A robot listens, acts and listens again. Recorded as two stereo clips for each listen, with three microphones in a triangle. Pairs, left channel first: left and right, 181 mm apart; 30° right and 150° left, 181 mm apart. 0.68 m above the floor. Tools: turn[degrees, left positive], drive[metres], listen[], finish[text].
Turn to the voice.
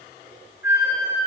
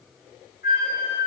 Action: listen[]
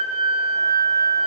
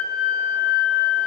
Action: listen[]
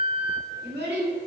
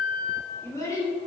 Thought: The child speaking: 100° right.
Action: turn[-100]
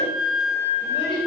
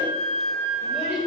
Action: listen[]
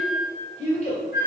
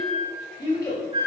Thought: The child speaking is now 40° left.
Action: turn[40]
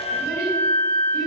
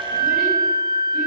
Action: listen[]
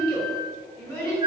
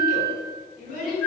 Thought: The child speaking is now 10° left.
Action: turn[10]
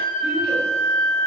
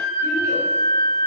Action: listen[]
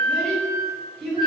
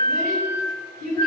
Action: finish[Found it: a child speaking, straight ahead, 1 to 2 m away.]